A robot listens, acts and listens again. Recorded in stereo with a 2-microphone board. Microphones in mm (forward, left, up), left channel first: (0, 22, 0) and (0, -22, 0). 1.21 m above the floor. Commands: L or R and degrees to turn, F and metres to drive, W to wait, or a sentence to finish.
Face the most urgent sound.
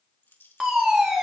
R30
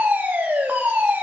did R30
R140
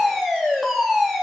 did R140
Found it: a fire alarm, straight ahead, 2 to 4 m away.